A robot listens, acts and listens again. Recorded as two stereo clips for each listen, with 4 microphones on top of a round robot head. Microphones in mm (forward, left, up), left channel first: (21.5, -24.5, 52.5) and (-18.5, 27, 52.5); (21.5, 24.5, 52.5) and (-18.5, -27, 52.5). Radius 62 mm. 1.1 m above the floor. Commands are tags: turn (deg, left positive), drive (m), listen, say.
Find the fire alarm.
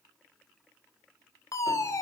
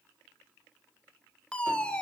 <turn deg="-20"/>
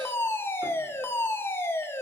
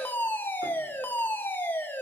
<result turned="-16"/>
<say>Found it: a fire alarm, straight ahead.</say>